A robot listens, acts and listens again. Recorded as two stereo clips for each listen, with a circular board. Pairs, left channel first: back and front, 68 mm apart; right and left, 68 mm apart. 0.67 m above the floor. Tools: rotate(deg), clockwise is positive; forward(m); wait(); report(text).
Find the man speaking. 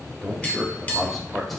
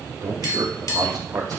rotate(-90)
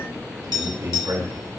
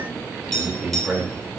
rotate(-10)
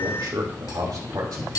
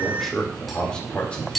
rotate(20)
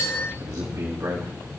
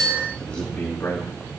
rotate(25)
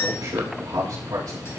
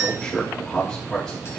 rotate(10)
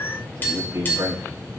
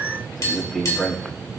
report("Found it: a man speaking, straight ahead.")